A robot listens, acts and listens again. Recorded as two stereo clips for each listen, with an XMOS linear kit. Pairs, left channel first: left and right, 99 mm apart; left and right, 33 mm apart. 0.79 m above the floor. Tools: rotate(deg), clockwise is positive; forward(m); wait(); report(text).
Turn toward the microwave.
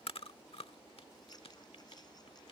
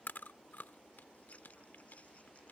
wait()
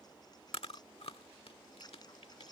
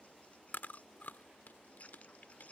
wait()
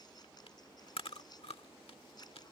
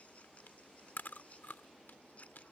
report("I can't make out a microwave, only scissors and chewing.")